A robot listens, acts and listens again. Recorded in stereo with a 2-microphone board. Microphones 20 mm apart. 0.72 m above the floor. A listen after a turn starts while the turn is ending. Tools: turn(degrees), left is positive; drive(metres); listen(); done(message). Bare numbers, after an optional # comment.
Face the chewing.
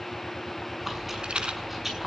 # The chewing: about 20° right or 160° right.
turn(-20)
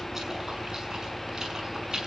# So it is at 140° right.
turn(-140)
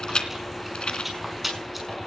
done("Found it: chewing, straight ahead.")